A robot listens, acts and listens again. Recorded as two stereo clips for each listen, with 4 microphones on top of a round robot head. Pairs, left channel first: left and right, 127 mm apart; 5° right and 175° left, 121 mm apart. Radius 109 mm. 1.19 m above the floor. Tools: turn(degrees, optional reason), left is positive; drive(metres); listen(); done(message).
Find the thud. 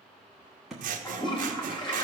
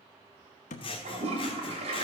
done("Facing the thud.")